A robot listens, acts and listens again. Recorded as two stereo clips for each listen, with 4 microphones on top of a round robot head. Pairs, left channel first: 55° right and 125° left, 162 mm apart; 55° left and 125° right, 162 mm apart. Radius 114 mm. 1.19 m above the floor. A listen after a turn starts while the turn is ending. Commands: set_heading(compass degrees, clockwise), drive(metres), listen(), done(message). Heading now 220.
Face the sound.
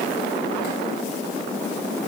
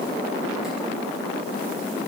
listen()
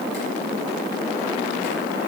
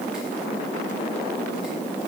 listen()
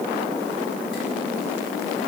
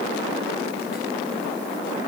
done("I can't make out anything.")